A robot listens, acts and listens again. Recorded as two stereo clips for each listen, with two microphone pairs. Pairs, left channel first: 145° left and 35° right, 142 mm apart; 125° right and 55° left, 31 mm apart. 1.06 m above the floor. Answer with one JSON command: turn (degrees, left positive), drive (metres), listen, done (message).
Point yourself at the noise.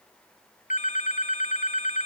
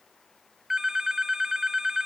{"turn": 120}
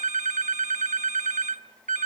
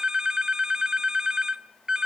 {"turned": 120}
{"turn": -10}
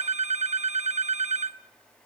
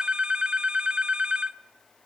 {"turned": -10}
{"done": "Facing the phone ringing, under 1 m away."}